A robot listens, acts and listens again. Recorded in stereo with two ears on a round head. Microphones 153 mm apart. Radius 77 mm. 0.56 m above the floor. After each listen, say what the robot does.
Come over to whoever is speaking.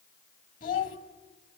Turn 50° left.
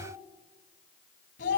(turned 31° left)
Turn 95° left.
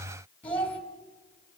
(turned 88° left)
Turn 10° left.
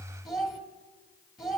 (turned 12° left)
Drive 1.0 m forward.
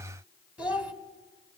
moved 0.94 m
Turn 10° right.
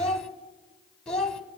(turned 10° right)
Drive 1.0 m forward.
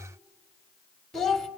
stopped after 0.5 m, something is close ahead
I am next to the child speaking.